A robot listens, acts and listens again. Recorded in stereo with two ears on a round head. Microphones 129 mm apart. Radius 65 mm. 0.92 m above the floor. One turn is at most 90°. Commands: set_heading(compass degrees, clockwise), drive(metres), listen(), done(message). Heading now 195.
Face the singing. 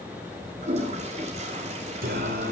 set_heading(260)
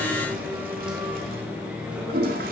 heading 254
done("Facing the singing.")